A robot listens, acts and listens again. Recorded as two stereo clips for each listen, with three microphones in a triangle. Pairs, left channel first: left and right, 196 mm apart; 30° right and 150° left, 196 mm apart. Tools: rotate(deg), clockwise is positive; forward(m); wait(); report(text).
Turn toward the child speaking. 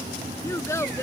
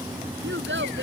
rotate(-165)
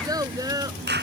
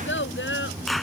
rotate(20)
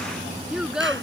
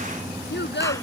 report("Facing the child speaking.")